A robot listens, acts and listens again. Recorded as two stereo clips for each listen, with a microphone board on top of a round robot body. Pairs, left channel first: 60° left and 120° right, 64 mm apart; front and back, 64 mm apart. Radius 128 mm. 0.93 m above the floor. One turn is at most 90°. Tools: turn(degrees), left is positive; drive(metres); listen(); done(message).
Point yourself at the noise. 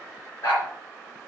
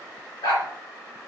done("Facing the dog barking, 2 to 4 m away.")